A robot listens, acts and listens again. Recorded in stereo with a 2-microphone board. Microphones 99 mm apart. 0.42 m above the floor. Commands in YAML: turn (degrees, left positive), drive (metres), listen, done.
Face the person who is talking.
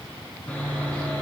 listen: true
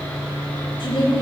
turn: 50
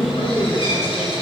turn: 80
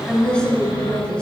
turn: 10
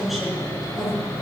done: "Found it: a woman speaking, straight ahead."